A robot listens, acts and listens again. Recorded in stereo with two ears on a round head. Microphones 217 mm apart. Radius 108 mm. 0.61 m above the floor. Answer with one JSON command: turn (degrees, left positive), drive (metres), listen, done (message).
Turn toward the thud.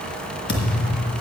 {"turn": 45}
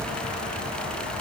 {"listen": true}
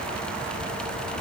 {"done": "I heard a thud, but can't make it out now. It was about straight ahead or 90° left."}